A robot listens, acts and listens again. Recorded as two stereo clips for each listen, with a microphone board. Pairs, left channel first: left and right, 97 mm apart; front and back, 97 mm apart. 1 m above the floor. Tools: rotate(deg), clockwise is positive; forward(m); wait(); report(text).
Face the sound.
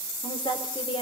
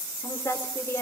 rotate(-60)
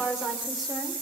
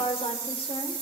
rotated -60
report("Facing the woman speaking, over 4 m away.")